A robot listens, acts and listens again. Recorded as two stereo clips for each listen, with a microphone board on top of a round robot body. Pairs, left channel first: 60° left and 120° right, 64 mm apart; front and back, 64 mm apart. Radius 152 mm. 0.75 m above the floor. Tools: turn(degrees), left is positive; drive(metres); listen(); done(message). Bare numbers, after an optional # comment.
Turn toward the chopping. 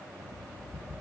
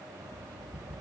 listen()
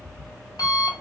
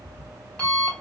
listen()
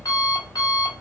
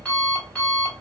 done("I can't make out chopping, only an alarm clock.")